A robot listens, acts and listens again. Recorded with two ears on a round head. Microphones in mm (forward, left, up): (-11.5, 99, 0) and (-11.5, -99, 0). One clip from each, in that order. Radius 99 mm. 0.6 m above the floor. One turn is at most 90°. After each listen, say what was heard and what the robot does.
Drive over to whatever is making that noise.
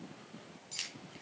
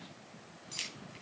Turn 30° left.
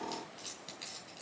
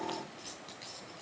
So it is at 150° left. Turn 90° left.
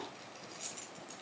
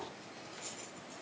The keys jangling is now 65° left. Turn 65° left.
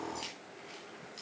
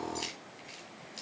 The keys jangling is now 15° right. Turn 15° right.
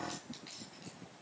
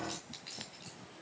Drive 1.0 m forward.
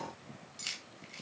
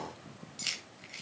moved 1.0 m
The keys jangling is now 10° right. Turn 10° right.
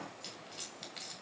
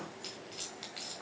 Drive 1.0 m forward.
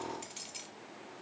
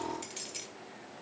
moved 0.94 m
Drive 1.0 m forward.
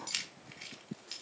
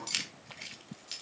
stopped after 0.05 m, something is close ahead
Arrived at the keys jangling, straight ahead.